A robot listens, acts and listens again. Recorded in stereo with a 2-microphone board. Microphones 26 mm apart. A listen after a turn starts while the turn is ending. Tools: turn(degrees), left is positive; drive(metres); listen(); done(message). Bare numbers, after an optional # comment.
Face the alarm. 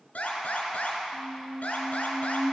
turn(90)
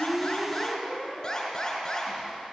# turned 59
# So it is at 30° left.
turn(30)
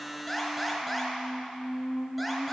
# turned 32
done("Facing the alarm, 2 to 4 m away.")